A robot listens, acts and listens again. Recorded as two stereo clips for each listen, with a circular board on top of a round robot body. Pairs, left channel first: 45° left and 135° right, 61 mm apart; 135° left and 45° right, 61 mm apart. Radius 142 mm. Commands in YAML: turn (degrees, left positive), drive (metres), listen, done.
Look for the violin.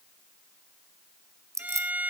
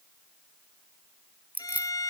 turn: 160
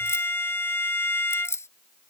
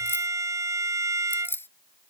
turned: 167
turn: -10
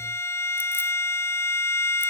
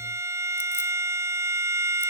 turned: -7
done: "Found it: a violin, straight ahead."